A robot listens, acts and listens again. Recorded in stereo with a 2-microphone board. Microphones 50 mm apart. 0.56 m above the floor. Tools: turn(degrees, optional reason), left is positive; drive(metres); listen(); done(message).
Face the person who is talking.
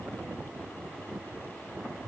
listen()
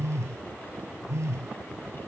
listen()
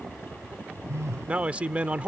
turn(degrees=-25, reason="The man speaking: about 25° right or 155° right.")
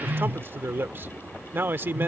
turn(degrees=-125, reason="So it is at 125° right.")
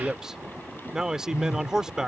turn(degrees=-15, reason="The man speaking is now 15° right.")
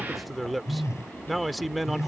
done("Found it: a man speaking, straight ahead.")